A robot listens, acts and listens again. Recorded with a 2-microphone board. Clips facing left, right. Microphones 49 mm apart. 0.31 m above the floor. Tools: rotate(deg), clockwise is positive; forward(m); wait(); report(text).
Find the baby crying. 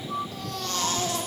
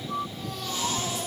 rotate(-70)
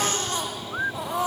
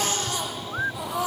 rotate(-40)
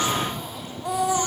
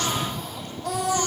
rotate(-20)
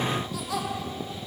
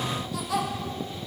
report("Facing the baby crying.")